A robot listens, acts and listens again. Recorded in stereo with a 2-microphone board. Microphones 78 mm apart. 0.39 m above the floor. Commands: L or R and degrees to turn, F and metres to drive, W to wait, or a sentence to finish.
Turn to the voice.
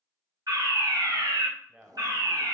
R15
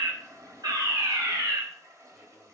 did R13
W
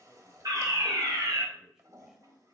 W
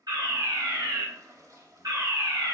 I heard a man speaking, but can't make it out now. It was about 5° right or 150° right.